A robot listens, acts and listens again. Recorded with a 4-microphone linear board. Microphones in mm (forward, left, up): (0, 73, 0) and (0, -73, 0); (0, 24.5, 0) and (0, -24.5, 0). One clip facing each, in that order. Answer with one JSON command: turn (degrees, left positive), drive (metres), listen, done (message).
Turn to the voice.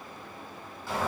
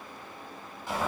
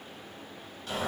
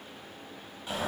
{"listen": true}
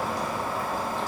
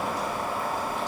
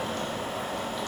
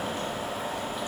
{"listen": true}
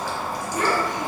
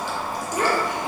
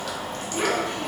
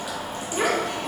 {"turn": -90}
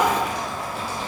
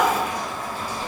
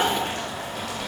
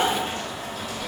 {"listen": true}
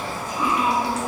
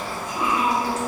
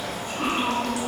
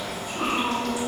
{"listen": true}
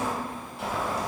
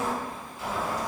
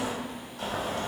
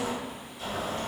{"done": "I heard a child speaking from this way, but can't make it out now."}